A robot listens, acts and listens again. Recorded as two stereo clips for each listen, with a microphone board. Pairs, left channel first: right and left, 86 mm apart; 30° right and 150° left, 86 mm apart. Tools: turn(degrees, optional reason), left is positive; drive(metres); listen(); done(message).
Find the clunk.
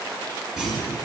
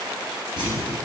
turn(degrees=175, reason="The clunk: 175° left.")
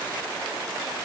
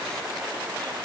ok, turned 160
turn(degrees=15, reason="Nothing new. It was at 15° left.")
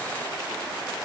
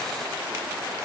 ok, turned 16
done("I heard a clunk from this way, but can't make it out now.")